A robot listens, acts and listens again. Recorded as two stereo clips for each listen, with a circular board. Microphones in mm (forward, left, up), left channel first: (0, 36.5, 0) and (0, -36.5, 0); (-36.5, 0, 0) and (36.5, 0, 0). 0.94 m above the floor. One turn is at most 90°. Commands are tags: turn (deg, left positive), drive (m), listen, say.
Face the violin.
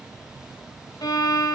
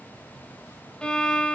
<turn deg="90"/>
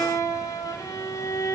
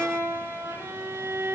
<turn deg="50"/>
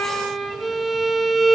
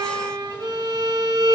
<say>Facing the violin, 1 to 2 m away.</say>